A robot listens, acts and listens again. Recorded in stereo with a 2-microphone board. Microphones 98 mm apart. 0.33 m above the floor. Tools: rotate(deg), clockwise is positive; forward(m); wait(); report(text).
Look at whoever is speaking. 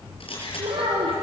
rotate(70)
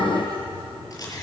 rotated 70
wait()
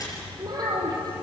rotate(40)
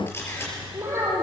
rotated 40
rotate(25)
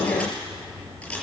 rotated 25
wait()
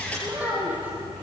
rotate(15)
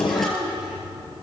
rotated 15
report("Facing the child speaking.")